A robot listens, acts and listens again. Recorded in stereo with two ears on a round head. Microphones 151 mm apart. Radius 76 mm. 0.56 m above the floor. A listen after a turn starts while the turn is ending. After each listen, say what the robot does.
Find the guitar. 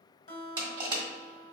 Turn 45° left.
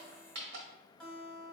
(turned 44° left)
Found it: a guitar, straight ahead, 1 to 2 m away.